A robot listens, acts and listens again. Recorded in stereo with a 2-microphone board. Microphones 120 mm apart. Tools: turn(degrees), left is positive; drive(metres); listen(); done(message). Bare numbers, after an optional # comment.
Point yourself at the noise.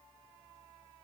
listen()
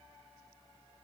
listen()
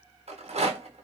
# The rattle: about 70° right or 110° right.
turn(-70)
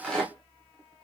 done("Facing the rattle.")